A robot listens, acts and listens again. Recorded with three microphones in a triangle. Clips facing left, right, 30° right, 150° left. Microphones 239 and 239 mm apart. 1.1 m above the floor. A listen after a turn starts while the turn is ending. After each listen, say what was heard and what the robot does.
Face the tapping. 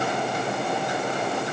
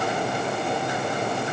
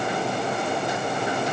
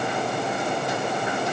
Keep listening.
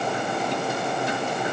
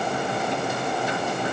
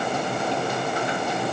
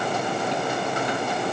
Keep listening.
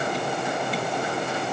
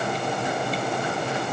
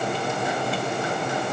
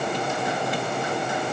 I can't make out tapping to turn to.